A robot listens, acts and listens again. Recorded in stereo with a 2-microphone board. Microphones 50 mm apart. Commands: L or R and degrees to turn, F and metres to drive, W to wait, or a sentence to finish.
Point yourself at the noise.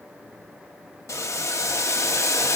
L90
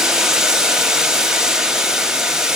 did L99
R15
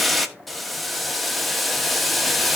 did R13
Facing the boiling, 1 to 2 m away.